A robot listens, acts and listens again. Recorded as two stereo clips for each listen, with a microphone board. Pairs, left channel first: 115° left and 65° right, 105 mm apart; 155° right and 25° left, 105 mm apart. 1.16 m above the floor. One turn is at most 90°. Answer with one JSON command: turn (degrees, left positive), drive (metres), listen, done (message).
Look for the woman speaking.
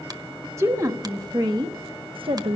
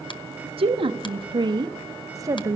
{"turn": -45}
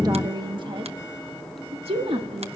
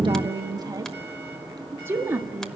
{"turn": -50}
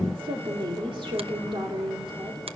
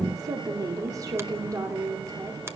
{"turn": -35}
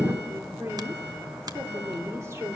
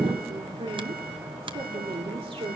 {"done": "Facing the woman speaking, 2 to 4 m away."}